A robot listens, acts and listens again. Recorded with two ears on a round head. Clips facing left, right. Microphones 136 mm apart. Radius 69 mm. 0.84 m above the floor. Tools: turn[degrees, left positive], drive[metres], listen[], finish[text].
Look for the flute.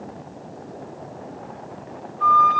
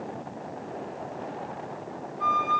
Action: turn[-30]
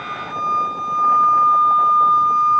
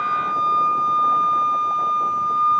Thought: So it is at 135° right.
Action: turn[-135]
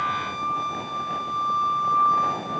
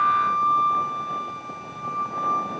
Action: finish[Facing the flute, under 1 m away.]